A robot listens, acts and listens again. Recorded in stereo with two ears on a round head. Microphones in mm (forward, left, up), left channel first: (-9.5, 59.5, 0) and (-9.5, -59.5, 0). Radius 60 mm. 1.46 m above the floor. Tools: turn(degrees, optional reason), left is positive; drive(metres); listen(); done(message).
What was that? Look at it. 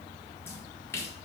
turn(degrees=20, reason="The splash: about 20° left or 160° left.")
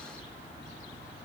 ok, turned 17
listen()
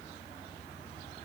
done("I heard a splash, but can't make it out now. It was about straight ahead or 145° left.")